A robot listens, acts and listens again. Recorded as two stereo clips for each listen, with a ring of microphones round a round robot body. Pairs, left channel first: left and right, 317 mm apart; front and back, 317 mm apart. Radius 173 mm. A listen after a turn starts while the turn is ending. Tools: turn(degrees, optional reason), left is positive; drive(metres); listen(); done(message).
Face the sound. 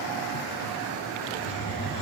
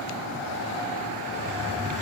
turn(degrees=75, reason="The hiss: 75° left.")
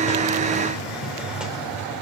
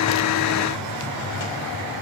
done("Found it: a hiss, straight ahead, 2 to 4 m away.")